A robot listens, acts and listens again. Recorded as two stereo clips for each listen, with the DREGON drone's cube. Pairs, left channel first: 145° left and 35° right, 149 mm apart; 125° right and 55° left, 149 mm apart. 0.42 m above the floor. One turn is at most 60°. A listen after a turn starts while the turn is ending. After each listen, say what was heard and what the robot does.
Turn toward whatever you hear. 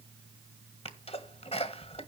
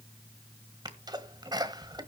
The sneeze: 110° left. Turn 60° left.
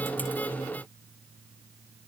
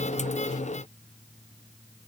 Nothing new. It was at 50° left. Turn 50° left.
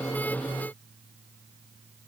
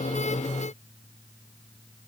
Facing where the sneeze came from. I can't hear it now.